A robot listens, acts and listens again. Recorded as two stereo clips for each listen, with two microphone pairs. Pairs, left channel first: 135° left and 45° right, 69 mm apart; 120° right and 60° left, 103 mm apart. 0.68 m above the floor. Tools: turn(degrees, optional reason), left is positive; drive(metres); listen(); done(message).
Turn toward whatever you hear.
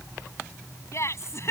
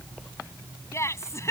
turn(degrees=180, reason="The laughter: straight behind.")
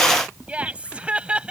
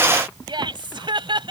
turn(degrees=30, reason="The laughter is now 30° left.")
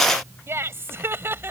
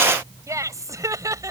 turn(degrees=10, reason="The laughter is now 10° left.")
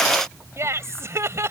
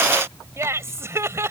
done("Found it: laughter, straight ahead.")